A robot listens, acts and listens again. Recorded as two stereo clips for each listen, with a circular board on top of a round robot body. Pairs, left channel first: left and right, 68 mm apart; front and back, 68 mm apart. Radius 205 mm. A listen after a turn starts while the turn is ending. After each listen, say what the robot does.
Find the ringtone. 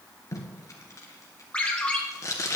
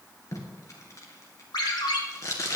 Turn 15° left.
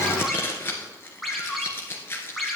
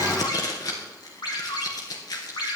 Facing the ringtone, 2 to 4 m away.